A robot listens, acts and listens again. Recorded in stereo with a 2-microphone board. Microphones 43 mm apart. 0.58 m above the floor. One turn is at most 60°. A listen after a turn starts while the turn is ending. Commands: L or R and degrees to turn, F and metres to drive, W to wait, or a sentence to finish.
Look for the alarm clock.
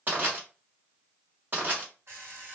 R60
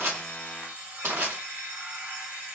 R40
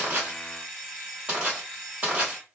Found it: an alarm clock, straight ahead, 1 to 2 m away.